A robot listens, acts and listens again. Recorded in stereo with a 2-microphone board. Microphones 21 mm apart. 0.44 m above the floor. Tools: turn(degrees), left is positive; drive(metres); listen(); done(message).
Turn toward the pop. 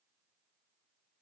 listen()
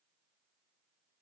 listen()
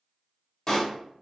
turn(degrees=35)
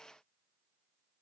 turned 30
listen()
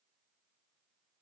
done("I heard a pop, but can't make it out now. It was about 5° left or 115° left.")